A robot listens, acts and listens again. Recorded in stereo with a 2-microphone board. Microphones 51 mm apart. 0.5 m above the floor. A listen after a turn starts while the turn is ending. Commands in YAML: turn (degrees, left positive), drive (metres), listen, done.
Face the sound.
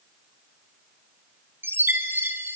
turn: -50
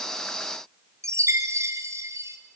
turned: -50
turn: -85
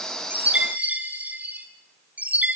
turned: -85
turn: -30
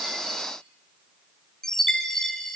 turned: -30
turn: 10
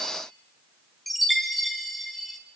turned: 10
done: "Facing the chime, 2 to 4 m away."